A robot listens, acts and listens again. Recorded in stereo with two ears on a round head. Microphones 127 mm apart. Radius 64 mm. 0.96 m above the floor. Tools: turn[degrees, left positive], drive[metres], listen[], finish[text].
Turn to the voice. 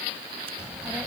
Action: turn[-30]
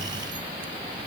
Thought: So it is at 140° right.
Action: turn[-140]
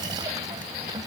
Thought: The child speaking is now 25° right.
Action: turn[-25]
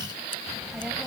Action: finish[Found it: a child speaking, straight ahead.]